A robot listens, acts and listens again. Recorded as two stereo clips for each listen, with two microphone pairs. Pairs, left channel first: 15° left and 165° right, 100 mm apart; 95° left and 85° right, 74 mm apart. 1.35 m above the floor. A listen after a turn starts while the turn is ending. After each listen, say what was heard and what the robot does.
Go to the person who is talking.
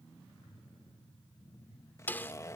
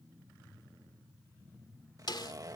Keep listening.
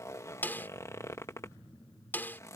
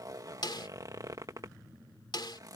Keep listening.
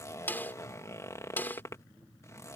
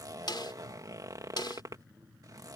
I can't make out anyone speaking to turn to.